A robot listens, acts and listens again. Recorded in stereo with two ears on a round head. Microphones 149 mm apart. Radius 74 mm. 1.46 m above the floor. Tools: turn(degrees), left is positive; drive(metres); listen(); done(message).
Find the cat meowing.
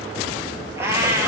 turn(degrees=-15)
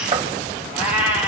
turn(degrees=-30)
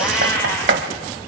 turn(degrees=20)
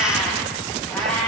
done("Found it: a cat meowing, straight ahead.")